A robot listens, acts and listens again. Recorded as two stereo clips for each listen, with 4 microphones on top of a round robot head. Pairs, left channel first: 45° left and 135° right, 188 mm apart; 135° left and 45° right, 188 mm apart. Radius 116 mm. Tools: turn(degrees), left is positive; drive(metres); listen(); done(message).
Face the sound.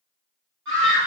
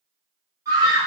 turn(degrees=-120)
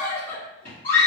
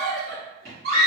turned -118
done("Found it: a scream, straight ahead, 1 to 2 m away.")